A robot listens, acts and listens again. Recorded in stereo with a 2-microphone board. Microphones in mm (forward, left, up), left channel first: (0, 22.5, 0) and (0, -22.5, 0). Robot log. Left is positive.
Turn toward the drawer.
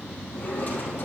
note: The drawer: about 40° left or 140° left.
cmd yaw +40
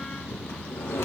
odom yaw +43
note: So it is at 100° left.
cmd yaw +100
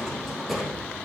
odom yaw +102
end: Found it: a drawer, straight ahead.